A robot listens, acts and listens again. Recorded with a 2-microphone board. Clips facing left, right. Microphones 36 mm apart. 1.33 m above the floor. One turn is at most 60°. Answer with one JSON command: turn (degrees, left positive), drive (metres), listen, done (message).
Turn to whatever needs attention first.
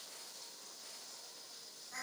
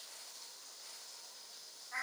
{"listen": true}
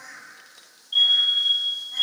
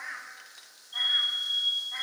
{"turn": 60}
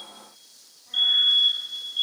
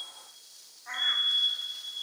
{"turn": 55}
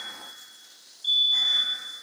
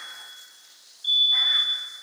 {"done": "Facing the fire alarm, 2 to 4 m away."}